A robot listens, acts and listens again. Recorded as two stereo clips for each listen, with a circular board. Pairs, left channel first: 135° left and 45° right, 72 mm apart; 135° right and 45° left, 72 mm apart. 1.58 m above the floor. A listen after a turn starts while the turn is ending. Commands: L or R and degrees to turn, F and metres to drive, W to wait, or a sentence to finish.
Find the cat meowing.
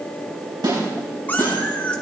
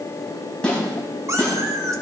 L65
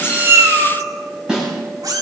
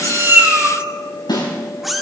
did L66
R45
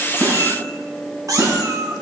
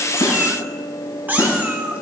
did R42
R20
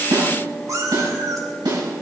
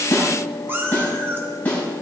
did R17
R10
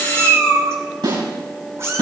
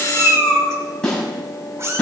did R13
Found it: a cat meowing, straight ahead.